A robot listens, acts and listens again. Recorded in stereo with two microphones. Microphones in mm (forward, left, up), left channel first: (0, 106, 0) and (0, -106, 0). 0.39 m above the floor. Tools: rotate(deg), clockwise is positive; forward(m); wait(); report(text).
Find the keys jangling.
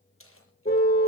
rotate(-75)
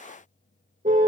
wait()
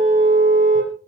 wait()
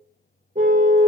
report("I heard keys jangling, but can't make it out now. It was about straight ahead or 30° left.")